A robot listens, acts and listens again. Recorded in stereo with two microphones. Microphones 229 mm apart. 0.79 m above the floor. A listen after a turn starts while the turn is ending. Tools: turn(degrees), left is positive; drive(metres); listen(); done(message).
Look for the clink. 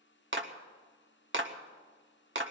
listen()
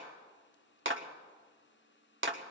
listen()
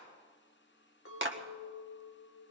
turn(degrees=65)
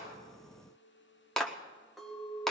done("Facing the clink.")